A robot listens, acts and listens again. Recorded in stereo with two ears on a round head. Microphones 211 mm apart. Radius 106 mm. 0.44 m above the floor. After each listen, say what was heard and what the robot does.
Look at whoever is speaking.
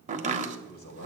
The man speaking: about 45° left or 135° left. Turn 45° left.
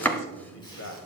So it is at 85° left. Turn 85° left.
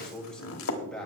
Found it: a man speaking, straight ahead.